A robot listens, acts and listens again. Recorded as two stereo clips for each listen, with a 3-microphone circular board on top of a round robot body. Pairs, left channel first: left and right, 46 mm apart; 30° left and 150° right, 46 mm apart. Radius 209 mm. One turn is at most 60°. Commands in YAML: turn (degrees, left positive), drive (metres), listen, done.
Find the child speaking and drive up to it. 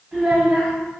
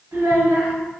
turn: -60
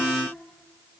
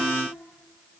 turn: -60
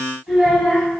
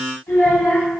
turn: -10
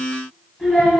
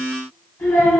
drive: 1.0
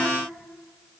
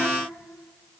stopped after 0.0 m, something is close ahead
listen: true
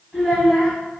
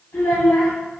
done: "Blocked. The child speaking is further on, straight ahead."